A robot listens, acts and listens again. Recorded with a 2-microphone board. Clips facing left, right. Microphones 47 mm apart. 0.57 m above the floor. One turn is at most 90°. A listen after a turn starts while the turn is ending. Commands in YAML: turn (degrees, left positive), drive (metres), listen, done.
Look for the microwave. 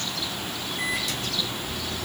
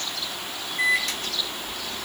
turn: -50
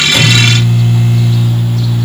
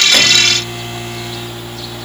turn: -65
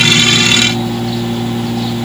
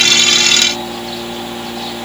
turn: -10
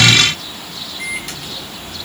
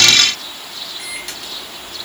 done: "Facing the microwave."